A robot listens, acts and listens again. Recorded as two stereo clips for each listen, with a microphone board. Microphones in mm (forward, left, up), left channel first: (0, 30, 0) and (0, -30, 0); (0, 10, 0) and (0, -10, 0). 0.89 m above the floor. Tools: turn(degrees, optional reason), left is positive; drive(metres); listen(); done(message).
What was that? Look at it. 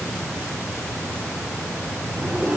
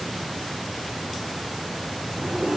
turn(degrees=-45, reason="The zipper: about 45° right or 135° right.")
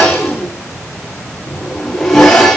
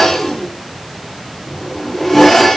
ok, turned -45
done("Found it: a zipper, straight ahead.")